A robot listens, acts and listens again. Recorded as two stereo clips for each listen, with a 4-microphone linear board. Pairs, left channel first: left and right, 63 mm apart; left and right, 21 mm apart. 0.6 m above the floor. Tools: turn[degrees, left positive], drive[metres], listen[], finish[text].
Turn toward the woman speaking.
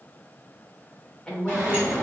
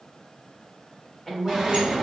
Action: turn[30]
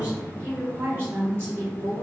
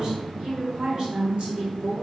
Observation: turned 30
Thought: So it is at 45° right.
Action: turn[-45]
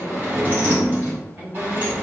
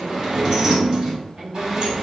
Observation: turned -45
Thought: The woman speaking is now 30° right.
Action: turn[-30]
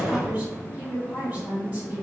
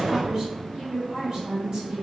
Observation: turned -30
Thought: The woman speaking is now 15° right.
Action: turn[-15]
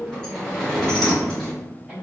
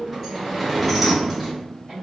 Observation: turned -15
Action: finish[Facing the woman speaking, 2 to 4 m away.]